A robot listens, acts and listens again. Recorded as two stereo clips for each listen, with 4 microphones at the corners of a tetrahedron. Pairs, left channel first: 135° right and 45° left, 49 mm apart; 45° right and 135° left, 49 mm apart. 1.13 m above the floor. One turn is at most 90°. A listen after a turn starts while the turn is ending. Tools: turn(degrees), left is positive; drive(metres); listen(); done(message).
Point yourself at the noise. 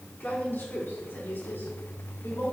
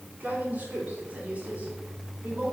turn(degrees=-90)
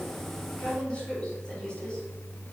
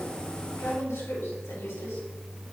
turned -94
turn(degrees=-60)
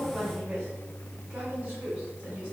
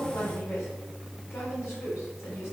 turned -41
turn(degrees=-15)
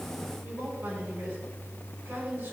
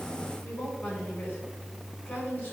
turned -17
done("Found it: a woman speaking, straight ahead, over 4 m away.")